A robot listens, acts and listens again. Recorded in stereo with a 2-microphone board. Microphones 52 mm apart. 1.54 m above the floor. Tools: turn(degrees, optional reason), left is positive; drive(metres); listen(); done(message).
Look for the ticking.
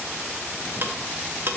turn(degrees=-45, reason="The ticking: about 45° right or 135° right.")
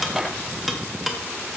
done("Facing the ticking, 1 to 2 m away.")